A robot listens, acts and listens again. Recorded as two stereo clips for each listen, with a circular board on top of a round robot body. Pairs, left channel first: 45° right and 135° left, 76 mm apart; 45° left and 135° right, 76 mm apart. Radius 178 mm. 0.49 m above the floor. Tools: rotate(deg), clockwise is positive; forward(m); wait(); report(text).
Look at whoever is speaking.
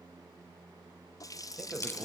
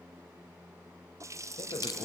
rotate(-50)
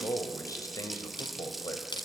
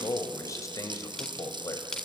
report("Found it: a man speaking, straight ahead, 2 to 4 m away.")